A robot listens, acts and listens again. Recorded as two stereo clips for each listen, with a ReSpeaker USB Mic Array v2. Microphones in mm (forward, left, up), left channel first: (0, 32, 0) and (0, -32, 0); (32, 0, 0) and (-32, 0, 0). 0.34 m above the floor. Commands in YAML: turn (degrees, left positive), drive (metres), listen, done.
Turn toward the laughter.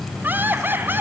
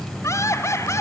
turn: -35
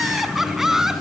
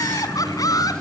done: "Facing the laughter, 2 to 4 m away."